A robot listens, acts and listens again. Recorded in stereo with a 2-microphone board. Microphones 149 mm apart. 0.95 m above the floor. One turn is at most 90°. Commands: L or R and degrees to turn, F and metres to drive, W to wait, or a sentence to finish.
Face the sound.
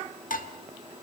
L70
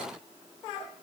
W
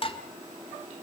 L40
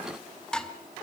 Facing the dishes clattering, 1 to 2 m away.